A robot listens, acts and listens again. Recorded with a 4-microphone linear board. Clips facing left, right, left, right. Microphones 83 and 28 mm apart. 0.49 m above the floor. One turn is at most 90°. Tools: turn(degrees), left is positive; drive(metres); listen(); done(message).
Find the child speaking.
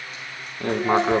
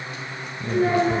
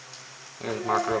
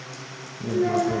turn(degrees=-35)
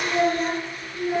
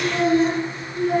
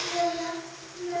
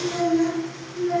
turn(degrees=-90)
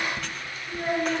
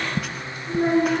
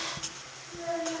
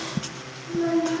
turn(degrees=-75)
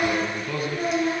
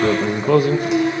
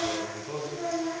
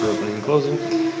done("Facing the child speaking.")